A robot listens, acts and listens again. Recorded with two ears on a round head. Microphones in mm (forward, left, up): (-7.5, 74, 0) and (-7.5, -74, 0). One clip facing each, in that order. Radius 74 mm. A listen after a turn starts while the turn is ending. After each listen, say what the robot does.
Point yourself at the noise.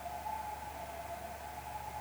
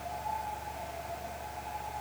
Keep listening.
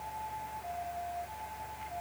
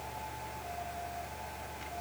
Keep listening.
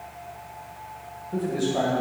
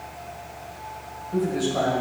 Turn 30° left.
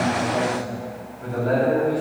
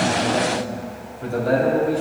Turn 30° right.
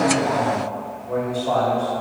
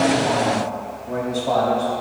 Facing the man speaking, 2 to 4 m away.